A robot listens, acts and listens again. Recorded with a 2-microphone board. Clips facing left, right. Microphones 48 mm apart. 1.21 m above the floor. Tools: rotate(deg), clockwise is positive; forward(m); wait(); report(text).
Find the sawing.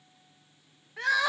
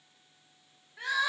wait()
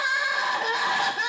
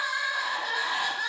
wait()
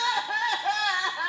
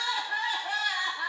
report("I can't make out sawing to turn to.")